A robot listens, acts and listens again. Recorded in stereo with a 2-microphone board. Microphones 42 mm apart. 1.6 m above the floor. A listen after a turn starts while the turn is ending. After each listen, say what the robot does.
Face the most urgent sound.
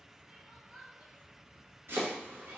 Turn 40° right.
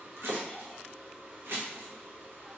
Keep listening.
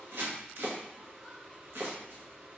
Keep listening.
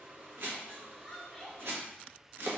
Facing the crying.